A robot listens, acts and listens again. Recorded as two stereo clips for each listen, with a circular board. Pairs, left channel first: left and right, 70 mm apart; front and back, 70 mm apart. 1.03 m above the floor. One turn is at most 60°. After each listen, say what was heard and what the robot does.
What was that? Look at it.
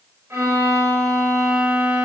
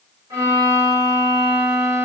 The violin: 145° right. Turn 60° right.
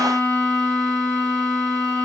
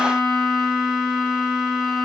The violin is now 90° right. Turn 60° right.
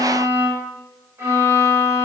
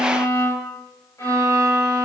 The violin is now 40° right. Turn 40° right.
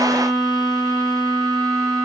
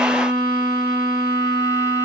Facing the violin.